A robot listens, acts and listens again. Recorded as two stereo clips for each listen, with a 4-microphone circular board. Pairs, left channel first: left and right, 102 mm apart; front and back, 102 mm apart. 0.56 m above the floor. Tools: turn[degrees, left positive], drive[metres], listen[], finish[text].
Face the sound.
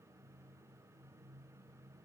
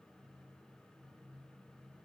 Action: listen[]
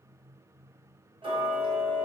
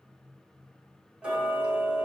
Thought: The ticking: 105° right.
Action: turn[-105]
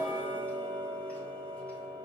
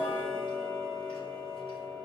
Thought: The ticking is now 15° left.
Action: turn[15]
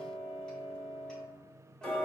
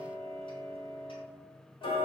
Thought: The ticking is now 10° left.
Action: turn[10]
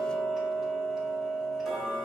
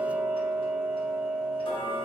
Action: finish[Found it: ticking, straight ahead.]